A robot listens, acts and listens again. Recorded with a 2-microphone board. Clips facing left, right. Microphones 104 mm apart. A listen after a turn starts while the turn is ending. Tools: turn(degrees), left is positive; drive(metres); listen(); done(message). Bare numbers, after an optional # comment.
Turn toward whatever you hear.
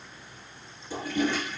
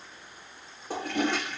# The toilet flushing: about 65° right or 115° right.
turn(-65)
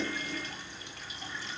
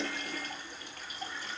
listen()
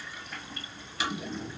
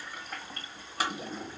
# So it is at 50° right.
turn(-50)
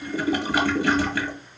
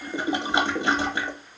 # The toilet flushing is now 25° right.
turn(-25)
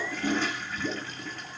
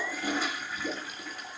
# The toilet flushing is now 10° right.
turn(-10)
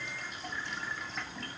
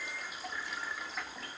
done("Facing the toilet flushing.")